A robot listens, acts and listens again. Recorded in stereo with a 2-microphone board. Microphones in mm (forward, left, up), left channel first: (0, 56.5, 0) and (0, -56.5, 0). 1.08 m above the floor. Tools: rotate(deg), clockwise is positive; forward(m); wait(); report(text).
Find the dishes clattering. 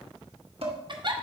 rotate(55)
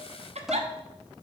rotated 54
report("Found it: dishes clattering, straight ahead, 1 to 2 m away.")